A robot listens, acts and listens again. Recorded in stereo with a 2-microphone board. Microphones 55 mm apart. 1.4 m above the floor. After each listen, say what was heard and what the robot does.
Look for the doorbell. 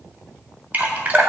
Keep listening.
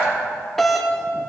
Turn 30° left.
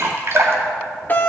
So it is at 145° left. Turn 145° left.
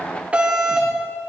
The doorbell is now 20° right. Turn 20° right.
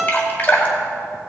Facing the doorbell.